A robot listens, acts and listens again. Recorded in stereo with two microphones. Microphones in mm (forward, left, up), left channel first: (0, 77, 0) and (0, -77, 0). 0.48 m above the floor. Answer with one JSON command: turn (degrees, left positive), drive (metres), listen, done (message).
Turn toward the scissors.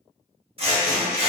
{"turn": -40}
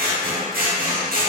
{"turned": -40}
{"turn": -100}
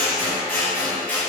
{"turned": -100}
{"turn": 10}
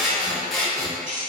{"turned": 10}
{"done": "Found it: scissors, straight ahead, under 1 m away."}